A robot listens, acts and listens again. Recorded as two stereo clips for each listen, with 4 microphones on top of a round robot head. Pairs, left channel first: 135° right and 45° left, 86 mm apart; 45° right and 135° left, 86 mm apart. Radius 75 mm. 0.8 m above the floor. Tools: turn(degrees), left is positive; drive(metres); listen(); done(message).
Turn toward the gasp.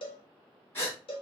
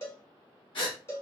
turn(degrees=-75)
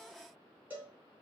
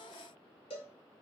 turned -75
done("Facing where the gasp came from. I can't hear it now.")